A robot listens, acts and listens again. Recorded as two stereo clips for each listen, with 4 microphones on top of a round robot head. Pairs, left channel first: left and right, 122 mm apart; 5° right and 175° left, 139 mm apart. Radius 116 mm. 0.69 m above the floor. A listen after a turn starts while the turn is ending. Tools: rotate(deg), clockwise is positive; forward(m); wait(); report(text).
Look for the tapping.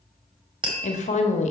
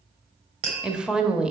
rotate(135)
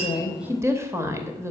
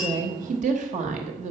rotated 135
wait()
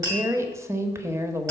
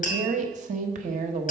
rotate(25)
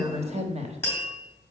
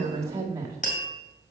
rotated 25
rotate(-15)
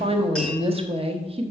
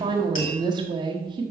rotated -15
wait()
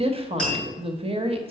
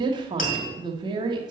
report("Found it: tapping, straight ahead.")